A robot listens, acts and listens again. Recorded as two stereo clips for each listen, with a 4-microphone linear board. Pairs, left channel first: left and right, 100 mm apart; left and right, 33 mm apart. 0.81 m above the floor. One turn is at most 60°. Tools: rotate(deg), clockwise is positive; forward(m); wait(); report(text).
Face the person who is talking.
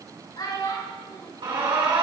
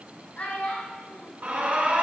rotate(-45)
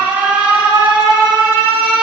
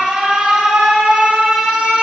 wait()
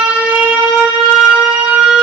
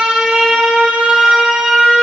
wait()
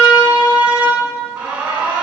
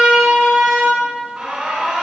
report("I heard a child speaking, but can't make it out now. It was about straight ahead or 90° left.")